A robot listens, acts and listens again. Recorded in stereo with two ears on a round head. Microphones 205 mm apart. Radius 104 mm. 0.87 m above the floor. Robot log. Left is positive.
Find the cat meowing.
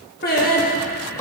cmd idle
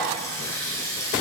cmd idle
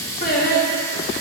end: I can't make out a cat meowing, only a running tap and singing.